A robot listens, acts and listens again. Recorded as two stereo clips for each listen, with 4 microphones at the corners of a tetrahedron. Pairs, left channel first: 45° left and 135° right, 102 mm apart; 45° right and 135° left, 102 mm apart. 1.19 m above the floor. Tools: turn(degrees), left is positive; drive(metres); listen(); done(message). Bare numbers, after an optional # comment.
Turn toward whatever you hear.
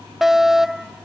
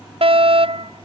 # The fire alarm: 140° left.
turn(140)
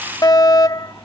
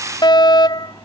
done("Found it: a fire alarm, straight ahead.")